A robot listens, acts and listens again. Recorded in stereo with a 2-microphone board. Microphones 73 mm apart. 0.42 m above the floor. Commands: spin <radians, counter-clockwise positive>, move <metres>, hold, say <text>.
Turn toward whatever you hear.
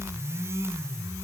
hold
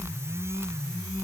hold
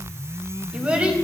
spin -0.35
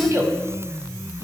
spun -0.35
spin -2.36
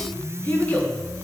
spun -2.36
spin 0.44
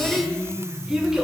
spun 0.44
spin -0.17
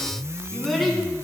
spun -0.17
say Found it: a child speaking, straight ahead.